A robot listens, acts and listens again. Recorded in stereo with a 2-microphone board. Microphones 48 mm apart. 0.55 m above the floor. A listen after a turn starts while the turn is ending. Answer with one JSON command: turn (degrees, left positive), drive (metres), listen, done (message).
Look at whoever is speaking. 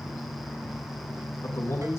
{"turn": 75}
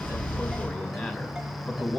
{"turn": 25}
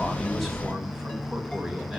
{"turn": -10}
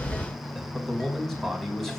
{"done": "Facing the man speaking, over 4 m away."}